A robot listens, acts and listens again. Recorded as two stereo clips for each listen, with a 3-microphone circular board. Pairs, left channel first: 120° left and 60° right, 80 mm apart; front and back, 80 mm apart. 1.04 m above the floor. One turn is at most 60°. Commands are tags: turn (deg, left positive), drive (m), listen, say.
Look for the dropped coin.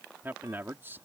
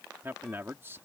<listen/>
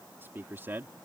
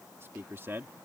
<listen/>
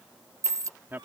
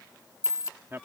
<turn deg="-25"/>
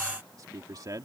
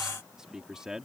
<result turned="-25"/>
<say>Facing where the dropped coin came from. I can't hear it now.</say>